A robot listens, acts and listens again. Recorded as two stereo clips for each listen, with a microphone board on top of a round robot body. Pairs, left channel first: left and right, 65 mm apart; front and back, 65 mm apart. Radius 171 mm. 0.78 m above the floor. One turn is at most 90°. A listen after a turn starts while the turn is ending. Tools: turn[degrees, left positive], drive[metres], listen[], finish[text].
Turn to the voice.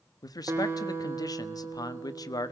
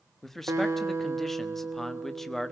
Thought: The man speaking: 85° left.
Action: turn[85]
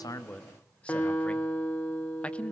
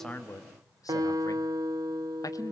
Thought: The man speaking is now 20° left.
Action: turn[20]
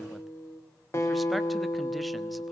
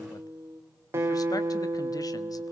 Action: listen[]
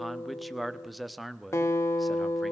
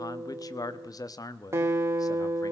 Action: finish[Facing the man speaking, 1 to 2 m away.]